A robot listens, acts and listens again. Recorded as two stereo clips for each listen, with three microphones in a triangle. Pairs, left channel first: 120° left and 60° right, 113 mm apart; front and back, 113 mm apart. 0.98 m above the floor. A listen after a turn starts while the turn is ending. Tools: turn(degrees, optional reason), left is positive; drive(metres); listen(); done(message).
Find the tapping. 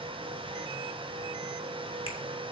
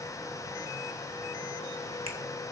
listen()
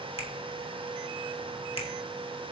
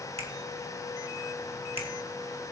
listen()
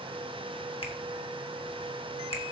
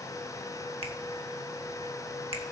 done("I can't make out tapping, only a finger snap.")